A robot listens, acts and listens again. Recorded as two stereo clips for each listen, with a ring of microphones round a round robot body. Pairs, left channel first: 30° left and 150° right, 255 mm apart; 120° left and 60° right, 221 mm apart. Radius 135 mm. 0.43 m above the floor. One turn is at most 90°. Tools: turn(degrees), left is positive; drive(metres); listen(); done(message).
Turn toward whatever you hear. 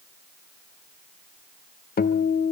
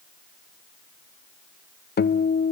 turn(degrees=80)
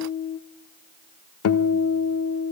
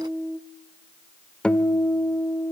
turn(degrees=35)
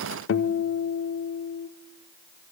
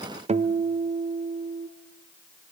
done("Found it: a guitar, straight ahead.")